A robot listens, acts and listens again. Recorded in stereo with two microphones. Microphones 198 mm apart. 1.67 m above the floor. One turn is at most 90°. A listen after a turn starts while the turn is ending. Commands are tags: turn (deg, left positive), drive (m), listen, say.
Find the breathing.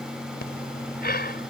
<turn deg="50"/>
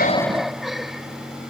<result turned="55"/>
<say>Facing the breathing.</say>